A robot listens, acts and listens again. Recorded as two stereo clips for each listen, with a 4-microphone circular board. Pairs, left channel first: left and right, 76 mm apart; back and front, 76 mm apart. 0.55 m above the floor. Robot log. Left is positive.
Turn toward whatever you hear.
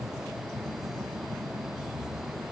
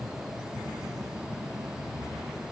cmd idle
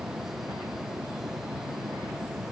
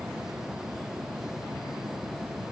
cmd idle
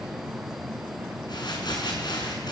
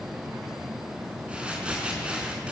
note: The crumpling: 75° left.
cmd yaw +75
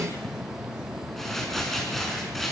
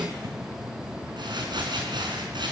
end: Facing the crumpling.